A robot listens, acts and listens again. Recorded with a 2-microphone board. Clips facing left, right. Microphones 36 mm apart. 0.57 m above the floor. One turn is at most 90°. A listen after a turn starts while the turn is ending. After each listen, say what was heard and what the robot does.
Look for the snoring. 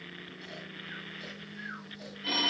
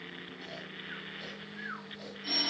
The snoring: about 35° right or 145° right. Turn 35° right.
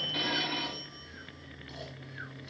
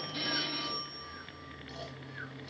Keep listening.
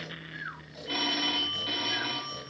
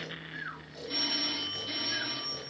Found it: snoring, straight ahead.